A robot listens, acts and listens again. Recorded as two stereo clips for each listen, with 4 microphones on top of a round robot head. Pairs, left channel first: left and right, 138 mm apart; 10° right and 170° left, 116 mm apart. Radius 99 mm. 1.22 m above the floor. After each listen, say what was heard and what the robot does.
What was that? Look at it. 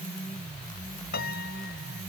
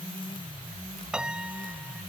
The piano: 90° left. Turn 90° left.
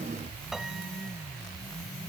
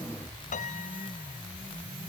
Keep listening.
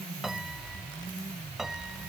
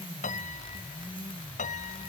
Found it: a piano, straight ahead.